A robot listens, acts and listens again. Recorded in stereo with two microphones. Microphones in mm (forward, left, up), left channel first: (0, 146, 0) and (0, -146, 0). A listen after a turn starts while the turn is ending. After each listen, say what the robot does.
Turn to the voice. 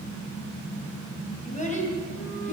Turn 25° left.
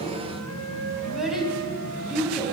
Found it: a child speaking, straight ahead, 2 to 4 m away.